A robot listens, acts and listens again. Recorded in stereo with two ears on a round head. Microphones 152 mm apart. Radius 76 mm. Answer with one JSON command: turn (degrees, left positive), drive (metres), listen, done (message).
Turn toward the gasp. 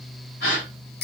{"turn": 70}
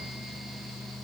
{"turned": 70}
{"listen": true}
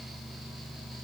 {"done": "I heard a gasp, but can't make it out now. It was about straight ahead or 40° left."}